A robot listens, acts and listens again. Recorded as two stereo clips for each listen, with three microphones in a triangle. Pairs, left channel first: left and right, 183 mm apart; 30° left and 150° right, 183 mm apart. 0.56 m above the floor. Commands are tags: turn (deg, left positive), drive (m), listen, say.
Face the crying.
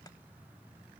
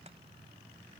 <listen/>
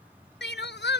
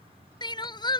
<turn deg="95"/>
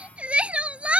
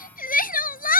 <say>Facing the crying.</say>